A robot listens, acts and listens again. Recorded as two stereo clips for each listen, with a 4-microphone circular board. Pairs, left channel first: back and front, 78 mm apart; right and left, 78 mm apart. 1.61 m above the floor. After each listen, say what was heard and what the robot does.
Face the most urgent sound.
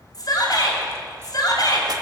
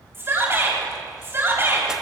The shout: 150° left. Turn 150° left.
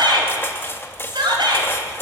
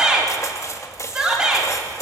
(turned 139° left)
The shout is now 10° left. Turn 10° left.
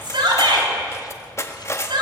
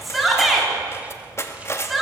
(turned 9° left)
Facing the shout, over 4 m away.